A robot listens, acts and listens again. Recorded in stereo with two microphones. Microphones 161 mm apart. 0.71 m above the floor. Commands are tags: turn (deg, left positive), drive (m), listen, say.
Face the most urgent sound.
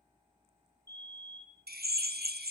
<turn deg="-25"/>
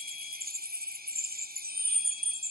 <listen/>
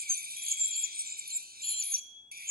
<say>Found it: a fire alarm, straight ahead.</say>